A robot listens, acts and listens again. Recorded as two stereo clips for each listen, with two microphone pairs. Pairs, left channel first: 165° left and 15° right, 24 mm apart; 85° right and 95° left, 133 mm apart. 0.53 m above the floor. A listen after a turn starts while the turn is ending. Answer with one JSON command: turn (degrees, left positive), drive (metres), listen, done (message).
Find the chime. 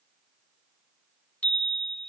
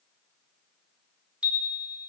{"turn": 175}
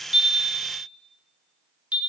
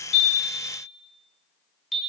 {"done": "Found it: a chime, straight ahead."}